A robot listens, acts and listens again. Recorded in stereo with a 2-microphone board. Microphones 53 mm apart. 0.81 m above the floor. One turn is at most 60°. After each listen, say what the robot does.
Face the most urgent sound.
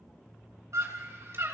Turn 60° right.
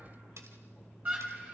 Turn 30° right.
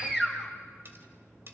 Turn 15° right.
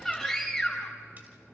Found it: a scream, straight ahead.